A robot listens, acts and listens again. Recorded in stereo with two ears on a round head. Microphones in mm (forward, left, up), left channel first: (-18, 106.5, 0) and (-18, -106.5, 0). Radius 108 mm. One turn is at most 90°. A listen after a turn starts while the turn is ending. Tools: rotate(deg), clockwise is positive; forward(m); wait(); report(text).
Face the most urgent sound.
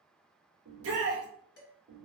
rotate(65)
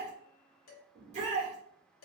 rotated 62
rotate(30)
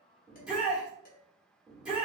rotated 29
report("Found it: a shout, straight ahead.")